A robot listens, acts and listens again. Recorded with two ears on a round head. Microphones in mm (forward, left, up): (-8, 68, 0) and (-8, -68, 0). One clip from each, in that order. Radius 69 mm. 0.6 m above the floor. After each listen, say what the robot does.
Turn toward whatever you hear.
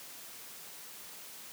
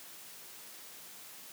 Keep listening.
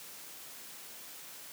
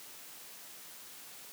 Keep listening.
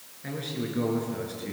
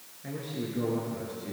Turn 50° left.
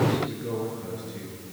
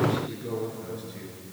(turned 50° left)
Turn 10° right.
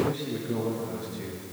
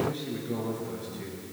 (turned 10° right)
Facing the man speaking.